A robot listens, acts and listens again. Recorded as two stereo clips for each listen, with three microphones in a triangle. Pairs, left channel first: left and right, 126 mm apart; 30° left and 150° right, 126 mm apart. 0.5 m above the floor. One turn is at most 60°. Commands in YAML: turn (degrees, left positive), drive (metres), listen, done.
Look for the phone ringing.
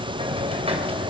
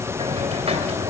listen: true
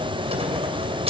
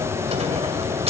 listen: true
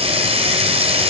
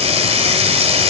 done: "I can't make out a phone ringing, only a hiss."